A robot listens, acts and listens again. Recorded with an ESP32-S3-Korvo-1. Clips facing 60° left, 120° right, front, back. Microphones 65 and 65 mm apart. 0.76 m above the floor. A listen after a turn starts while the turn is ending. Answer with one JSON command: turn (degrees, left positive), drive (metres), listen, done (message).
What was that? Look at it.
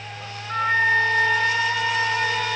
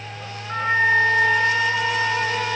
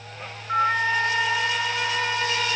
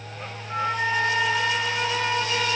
{"turn": -45}
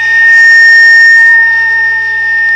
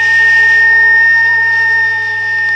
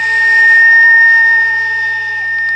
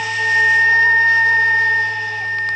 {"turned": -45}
{"done": "Found it: a flute, straight ahead, 1 to 2 m away."}